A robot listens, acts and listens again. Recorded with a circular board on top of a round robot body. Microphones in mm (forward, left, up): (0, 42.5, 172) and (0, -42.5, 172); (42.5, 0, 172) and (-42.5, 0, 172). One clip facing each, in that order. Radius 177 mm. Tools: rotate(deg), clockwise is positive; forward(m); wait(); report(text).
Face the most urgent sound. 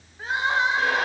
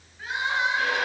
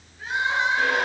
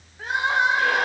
rotate(-145)
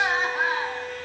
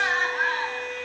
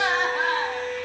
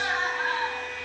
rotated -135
report("Facing the crying, 1 to 2 m away.")